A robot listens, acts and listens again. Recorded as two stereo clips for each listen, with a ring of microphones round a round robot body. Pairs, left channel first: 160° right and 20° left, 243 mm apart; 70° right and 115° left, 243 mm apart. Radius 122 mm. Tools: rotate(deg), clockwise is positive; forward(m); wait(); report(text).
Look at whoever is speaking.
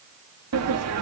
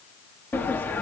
wait()
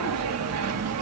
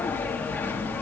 wait()
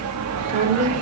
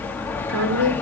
rotate(-85)
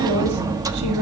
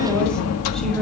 rotate(-20)
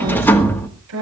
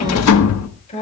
report("Facing the woman speaking.")